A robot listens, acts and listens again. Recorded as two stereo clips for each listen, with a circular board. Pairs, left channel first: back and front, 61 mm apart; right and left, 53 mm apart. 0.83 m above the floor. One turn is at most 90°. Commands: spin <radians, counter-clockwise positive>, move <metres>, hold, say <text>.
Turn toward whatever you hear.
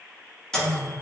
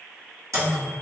spin 1.57
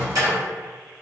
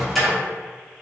say Found it: a microwave, straight ahead, under 1 m away.